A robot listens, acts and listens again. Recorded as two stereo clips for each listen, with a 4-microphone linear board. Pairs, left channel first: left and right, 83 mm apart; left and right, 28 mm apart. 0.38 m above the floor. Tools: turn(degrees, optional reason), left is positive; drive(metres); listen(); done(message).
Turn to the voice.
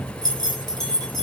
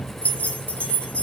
listen()
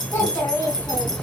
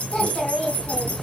turn(degrees=25, reason="The child speaking: about 25° left or 155° left.")
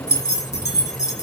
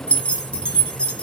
listen()
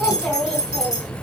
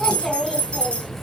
done("Facing the child speaking.")